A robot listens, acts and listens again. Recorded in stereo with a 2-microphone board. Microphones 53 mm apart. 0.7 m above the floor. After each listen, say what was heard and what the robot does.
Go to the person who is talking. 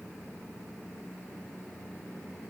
Keep listening.
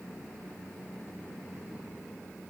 Keep listening.
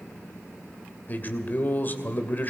The man speaking: about 40° left or 140° left. Turn 40° left.
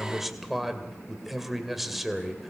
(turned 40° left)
Drive 1.0 m forward.
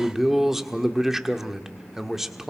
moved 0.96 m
Drive 1.0 m forward.
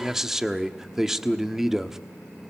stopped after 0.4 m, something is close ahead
I am next to the man speaking.